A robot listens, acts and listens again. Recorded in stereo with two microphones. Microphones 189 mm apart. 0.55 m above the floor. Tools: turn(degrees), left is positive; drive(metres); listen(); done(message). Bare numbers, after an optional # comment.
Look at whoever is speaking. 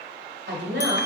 # The woman speaking: about 75° right or 105° right.
turn(-75)
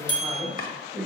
done("Facing the woman speaking, 1 to 2 m away.")